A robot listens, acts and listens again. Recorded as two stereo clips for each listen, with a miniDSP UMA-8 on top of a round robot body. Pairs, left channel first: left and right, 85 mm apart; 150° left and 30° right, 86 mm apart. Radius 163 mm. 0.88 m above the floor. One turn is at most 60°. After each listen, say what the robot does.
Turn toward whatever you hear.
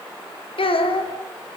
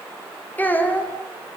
Turn 60° left.
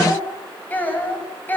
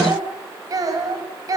Turn 20° left.
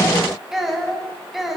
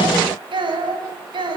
Facing the child speaking, over 4 m away.